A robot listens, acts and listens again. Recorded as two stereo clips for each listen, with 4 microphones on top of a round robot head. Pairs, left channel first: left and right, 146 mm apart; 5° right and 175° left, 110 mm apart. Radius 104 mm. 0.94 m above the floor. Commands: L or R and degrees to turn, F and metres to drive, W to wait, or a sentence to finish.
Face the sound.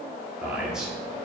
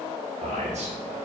R175
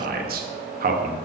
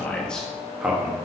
R110
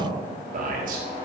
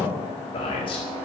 R55
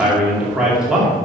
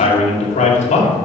Facing the man speaking.